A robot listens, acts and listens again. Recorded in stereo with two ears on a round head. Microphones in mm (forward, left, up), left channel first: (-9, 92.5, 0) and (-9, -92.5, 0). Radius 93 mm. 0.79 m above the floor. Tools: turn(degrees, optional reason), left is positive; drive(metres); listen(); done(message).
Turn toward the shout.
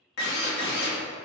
listen()
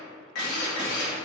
listen()
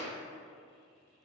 done("I can't make out a shout, only a drill.")